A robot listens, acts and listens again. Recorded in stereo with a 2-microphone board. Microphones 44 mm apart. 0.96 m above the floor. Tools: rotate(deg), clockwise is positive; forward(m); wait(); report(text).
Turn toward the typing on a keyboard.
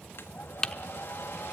rotate(-30)
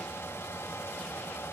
wait()
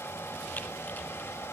wait()
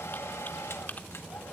report("I heard typing on a keyboard, but can't make it out now. It was about 15° right or 135° left.")